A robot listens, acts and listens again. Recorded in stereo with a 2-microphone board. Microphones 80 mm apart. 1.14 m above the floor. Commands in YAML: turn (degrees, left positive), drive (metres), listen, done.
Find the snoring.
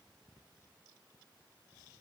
listen: true
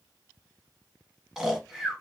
turn: -30
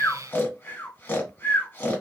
turn: 30
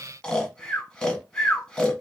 turn: 15
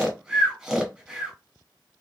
done: "Found it: snoring, straight ahead."